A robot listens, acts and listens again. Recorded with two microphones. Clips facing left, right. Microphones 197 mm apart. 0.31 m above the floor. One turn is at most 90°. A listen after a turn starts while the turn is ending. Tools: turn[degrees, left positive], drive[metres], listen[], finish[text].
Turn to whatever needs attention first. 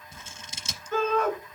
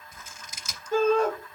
Thought: The shout: about 30° right or 150° right.
Action: turn[-30]
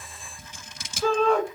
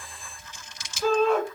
Action: finish[Found it: a shout, straight ahead.]